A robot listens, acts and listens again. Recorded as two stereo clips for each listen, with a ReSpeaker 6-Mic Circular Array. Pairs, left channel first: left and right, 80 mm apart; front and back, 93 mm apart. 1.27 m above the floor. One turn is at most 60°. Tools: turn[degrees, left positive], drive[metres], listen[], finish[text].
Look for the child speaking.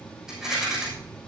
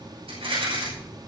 Thought: The child speaking: 85° left.
Action: turn[60]
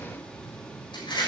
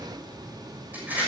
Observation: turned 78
Thought: Nothing new. It was at 10° left.
Action: turn[10]
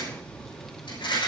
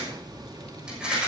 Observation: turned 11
Action: finish[Found it: a child speaking, straight ahead, 1 to 2 m away.]